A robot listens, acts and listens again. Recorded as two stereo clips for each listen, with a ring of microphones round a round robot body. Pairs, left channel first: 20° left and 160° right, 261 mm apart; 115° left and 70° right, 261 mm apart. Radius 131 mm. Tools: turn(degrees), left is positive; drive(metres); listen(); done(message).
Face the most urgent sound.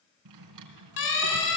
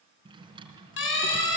turn(degrees=65)
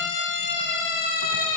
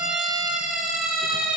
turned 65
turn(degrees=20)
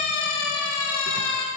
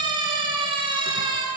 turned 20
done("Facing the siren.")